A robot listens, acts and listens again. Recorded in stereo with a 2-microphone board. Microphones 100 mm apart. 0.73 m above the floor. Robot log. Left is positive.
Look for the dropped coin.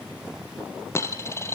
note: The dropped coin: about 25° left or 155° left.
cmd yaw +25
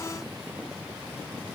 cmd idle
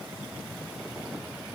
end: I heard a dropped coin, but can't make it out now. It was about straight ahead or 130° left.